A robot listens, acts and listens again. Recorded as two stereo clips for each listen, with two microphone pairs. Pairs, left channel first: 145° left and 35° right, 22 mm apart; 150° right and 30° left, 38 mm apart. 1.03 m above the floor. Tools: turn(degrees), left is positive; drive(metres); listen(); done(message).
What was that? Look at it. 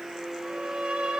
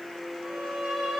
turn(degrees=-45)
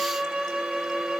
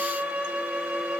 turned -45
done("Found it: a violin, straight ahead.")